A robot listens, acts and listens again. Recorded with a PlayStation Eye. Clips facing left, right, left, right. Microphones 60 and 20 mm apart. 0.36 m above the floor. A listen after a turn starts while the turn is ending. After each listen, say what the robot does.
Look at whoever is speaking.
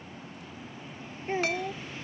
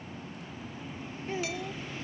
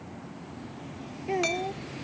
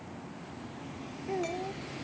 Turn 40° left.
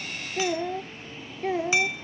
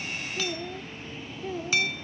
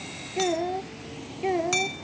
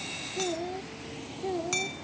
Turn 100° left.
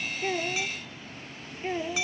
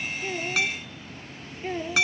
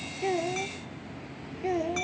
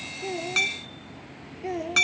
Facing the child speaking.